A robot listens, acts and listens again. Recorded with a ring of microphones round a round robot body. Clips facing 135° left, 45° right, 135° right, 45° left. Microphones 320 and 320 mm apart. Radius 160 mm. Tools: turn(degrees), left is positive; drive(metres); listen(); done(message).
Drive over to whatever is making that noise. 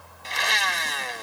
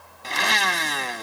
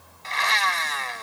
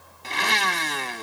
turn(degrees=-10)
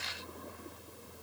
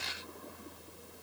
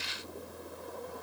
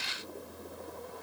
listen()
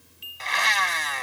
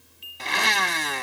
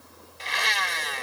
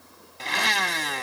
drive(metres=1.0)
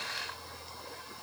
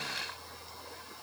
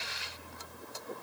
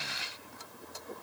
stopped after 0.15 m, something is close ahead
listen()
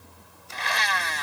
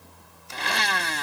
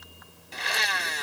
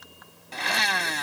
done("Blocked. The blender is further on, straight ahead.")